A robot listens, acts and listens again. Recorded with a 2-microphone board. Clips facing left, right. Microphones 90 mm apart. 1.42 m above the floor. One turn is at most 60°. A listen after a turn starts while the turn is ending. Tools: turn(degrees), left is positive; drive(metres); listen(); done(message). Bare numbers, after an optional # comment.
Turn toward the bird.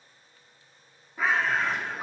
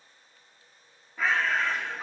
turn(30)
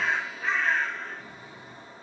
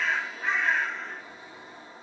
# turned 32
# So it is at 20° right.
turn(-20)
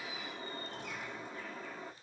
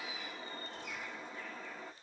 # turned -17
done("Found it: a bird, straight ahead, 1 to 2 m away.")